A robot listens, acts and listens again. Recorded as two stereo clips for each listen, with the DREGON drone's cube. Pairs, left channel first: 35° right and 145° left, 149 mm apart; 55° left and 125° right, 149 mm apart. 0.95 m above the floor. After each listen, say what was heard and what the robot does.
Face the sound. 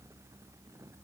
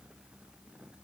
Keep listening.
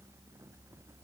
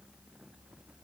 Keep listening.
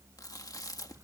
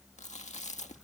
The chewing: 30° left. Turn 30° left.
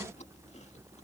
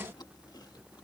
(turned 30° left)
Keep listening.
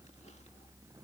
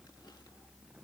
Keep listening.
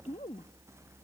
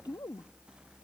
Facing the chewing.